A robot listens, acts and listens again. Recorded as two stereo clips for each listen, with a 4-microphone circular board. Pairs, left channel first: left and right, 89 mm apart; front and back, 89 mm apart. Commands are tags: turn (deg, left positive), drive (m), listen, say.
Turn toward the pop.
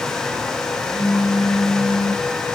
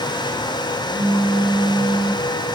<turn deg="130"/>
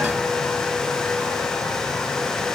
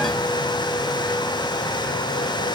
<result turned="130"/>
<say>I heard a pop from this way, but can't make it out now.</say>